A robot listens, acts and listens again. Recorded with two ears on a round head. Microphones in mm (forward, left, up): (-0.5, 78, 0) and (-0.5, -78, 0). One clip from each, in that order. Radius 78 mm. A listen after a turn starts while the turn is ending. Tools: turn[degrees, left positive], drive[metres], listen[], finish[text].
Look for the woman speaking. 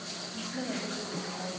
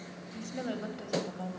Thought: The woman speaking: about 75° right or 105° right.
Action: turn[-75]
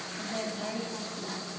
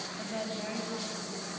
Action: finish[Found it: a woman speaking, straight ahead, over 4 m away.]